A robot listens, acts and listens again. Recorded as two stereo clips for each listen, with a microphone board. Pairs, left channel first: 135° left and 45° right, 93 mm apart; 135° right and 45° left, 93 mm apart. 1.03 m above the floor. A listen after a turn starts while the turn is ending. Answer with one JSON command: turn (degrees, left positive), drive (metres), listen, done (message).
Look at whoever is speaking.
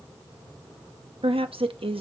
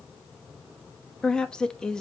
{"turn": -55}
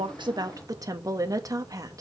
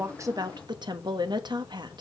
{"done": "Found it: a woman speaking, straight ahead, 1 to 2 m away."}